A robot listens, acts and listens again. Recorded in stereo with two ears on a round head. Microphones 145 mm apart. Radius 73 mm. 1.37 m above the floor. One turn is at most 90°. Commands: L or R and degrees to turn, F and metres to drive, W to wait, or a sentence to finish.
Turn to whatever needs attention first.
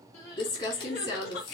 L60
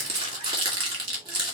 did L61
W
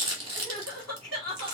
Found it: crying, straight ahead.